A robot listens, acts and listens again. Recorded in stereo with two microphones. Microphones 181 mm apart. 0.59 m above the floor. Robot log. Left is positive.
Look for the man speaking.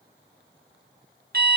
cmd idle
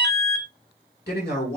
note: The man speaking: about 60° left or 120° left.
cmd yaw +60
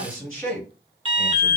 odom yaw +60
end: Facing the man speaking, 2 to 4 m away.